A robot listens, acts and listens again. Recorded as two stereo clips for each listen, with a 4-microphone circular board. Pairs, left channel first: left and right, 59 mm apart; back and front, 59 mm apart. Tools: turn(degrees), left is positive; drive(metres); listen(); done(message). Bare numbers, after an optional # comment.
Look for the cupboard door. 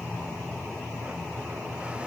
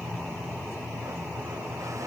listen()
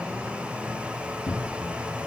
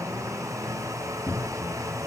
# The cupboard door: 125° left.
turn(125)
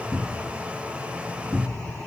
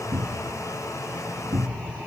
# The cupboard door is now 15° right.
turn(-15)
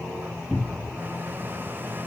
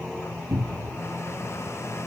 done("Found it: a cupboard door, straight ahead.")